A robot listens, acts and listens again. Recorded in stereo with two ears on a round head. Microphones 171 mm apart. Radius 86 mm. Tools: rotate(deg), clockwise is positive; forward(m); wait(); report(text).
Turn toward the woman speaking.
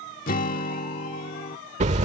wait()
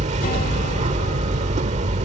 wait()
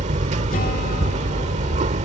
report("I can't make out a woman speaking to turn to.")